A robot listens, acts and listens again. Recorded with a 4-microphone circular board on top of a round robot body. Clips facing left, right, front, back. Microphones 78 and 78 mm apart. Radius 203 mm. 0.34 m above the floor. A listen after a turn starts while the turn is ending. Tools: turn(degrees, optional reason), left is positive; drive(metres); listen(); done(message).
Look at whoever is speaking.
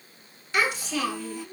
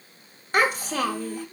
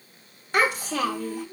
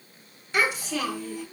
turn(degrees=-40, reason="The child speaking: 40° right.")
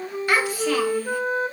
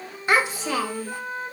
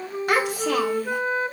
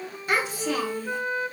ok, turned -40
turn(degrees=-20, reason="The child speaking is now 20° right.")
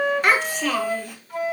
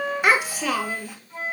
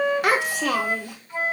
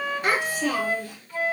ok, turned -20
done("Found it: a child speaking, straight ahead.")